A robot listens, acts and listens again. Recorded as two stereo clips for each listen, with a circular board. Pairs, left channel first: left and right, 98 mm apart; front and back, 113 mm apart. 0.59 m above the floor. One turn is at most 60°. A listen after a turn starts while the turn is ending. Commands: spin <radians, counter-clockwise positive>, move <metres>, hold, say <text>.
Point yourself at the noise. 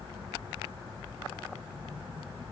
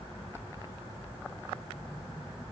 hold
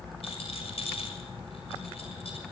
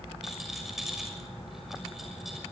spin 1.05
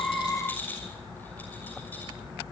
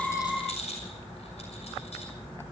spin 0.35
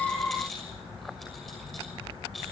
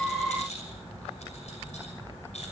say Found it: a rattle, straight ahead, over 4 m away.